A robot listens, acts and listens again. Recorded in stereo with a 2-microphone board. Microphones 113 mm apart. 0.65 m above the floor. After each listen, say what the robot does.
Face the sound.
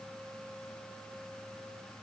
Keep listening.
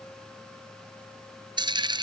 Turn 40° right.
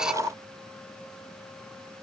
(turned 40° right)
Keep listening.
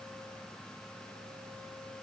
I heard a dropped coin, but can't make it out now. It was about straight ahead or 100° right.